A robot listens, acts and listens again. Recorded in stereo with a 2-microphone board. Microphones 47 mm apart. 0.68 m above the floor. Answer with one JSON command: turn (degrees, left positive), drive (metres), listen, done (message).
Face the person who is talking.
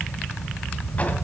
{"listen": true}
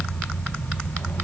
{"listen": true}
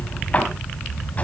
{"done": "I can't make out anyone speaking, only a drawer."}